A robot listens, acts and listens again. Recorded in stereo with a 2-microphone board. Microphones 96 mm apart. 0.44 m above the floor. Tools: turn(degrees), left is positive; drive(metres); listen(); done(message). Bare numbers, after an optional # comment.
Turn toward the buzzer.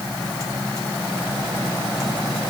listen()
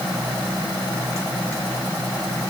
listen()
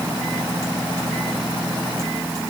done("I can't make out a buzzer to turn to.")